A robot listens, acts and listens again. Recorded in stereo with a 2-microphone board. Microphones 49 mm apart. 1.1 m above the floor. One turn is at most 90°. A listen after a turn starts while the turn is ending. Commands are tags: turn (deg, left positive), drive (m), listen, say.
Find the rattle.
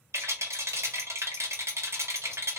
<turn deg="-65"/>
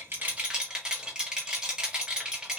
<turn deg="-15"/>
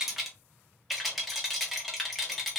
<say>Facing the rattle.</say>